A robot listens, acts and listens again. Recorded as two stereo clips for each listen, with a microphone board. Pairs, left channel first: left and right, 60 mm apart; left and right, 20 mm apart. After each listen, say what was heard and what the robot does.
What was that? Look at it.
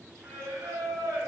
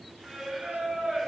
The singing: about 65° right or 115° right. Turn 65° right.
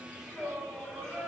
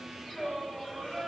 Found it: singing, straight ahead, 2 to 4 m away.